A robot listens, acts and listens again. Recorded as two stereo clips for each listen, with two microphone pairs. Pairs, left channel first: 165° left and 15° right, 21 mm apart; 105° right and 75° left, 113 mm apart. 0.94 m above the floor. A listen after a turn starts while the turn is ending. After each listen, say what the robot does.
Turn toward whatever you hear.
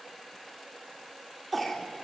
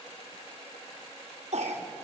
Turn 75° left.
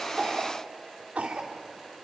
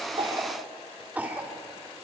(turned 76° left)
Found it: a cough, straight ahead, 2 to 4 m away.